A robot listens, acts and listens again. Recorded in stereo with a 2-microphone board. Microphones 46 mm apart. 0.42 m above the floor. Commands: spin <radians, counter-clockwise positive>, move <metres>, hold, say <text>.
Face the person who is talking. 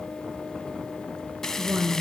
spin -1.13
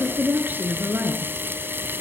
spin -0.79
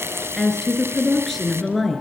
say Facing the woman speaking, over 4 m away.